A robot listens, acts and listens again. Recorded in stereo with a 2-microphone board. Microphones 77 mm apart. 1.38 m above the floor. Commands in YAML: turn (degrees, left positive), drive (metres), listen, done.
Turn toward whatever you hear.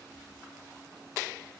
listen: true
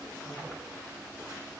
listen: true
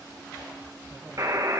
turn: -50
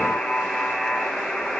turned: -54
done: "Facing the buzzer, 1 to 2 m away."